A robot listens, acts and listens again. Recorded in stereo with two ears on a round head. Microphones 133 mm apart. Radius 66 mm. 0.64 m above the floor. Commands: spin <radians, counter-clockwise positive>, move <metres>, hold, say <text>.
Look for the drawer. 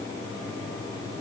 hold
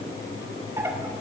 spin -0.35
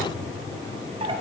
spin -2.44
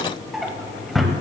say Facing the drawer, 1 to 2 m away.